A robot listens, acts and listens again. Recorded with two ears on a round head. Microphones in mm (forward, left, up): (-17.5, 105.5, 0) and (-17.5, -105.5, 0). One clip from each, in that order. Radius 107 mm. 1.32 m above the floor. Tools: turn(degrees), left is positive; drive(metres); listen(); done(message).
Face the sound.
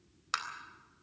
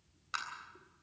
turn(degrees=55)
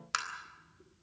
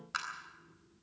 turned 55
turn(degrees=70)
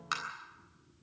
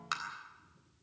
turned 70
done("Found it: tapping, straight ahead, 2 to 4 m away.")